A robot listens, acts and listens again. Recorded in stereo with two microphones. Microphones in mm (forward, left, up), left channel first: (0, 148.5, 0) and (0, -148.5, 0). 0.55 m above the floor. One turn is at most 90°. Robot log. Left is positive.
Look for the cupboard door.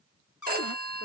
cmd yaw +90
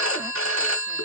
cmd idle
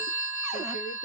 cmd idle
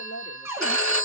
note: The cupboard door is now 10° right.
cmd yaw -10
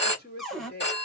end: Found it: a cupboard door, straight ahead.